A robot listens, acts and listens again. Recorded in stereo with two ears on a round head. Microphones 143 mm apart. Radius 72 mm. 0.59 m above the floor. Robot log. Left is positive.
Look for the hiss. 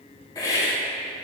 note: The hiss: about 25° left or 155° left.
cmd yaw +25
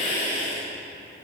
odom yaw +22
note: So it is at 135° left.
cmd yaw +135
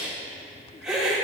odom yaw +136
end: Found it: a hiss, straight ahead.